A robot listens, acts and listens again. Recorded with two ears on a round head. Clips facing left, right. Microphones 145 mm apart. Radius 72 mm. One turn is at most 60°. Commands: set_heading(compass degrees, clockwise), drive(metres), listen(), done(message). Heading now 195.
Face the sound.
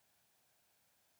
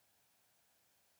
listen()
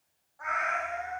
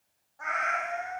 set_heading(225)
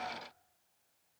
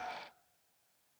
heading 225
listen()
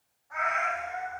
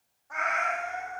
set_heading(285)
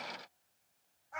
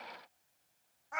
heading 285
set_heading(345)
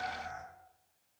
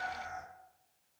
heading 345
set_heading(355)
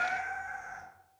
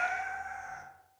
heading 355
done("Found it: a cat meowing, straight ahead.")